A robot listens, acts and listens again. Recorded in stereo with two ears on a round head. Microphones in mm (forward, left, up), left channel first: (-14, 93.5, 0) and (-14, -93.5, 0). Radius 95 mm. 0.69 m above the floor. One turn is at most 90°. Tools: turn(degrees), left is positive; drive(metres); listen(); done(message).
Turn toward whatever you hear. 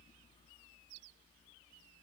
listen()
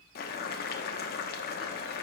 turn(degrees=50)
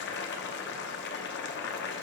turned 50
turn(degrees=70)
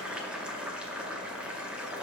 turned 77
done("Facing the boiling.")